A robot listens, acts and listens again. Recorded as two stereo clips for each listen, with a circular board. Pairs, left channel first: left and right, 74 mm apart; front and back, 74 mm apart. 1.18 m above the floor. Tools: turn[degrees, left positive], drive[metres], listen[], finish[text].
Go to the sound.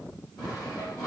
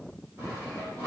Thought: The sawing: 130° left.
Action: turn[130]
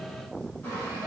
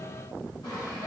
Thought: The sawing is now 25° left.
Action: turn[25]
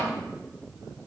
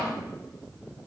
Action: listen[]
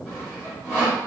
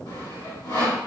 Thought: The sawing is now 15° right.
Action: turn[-15]
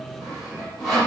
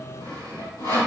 Action: drive[1.0]
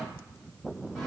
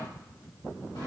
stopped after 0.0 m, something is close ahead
Action: listen[]
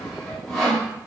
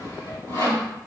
Action: finish[Something is in my way. I am facing the sawing but have not reached it.]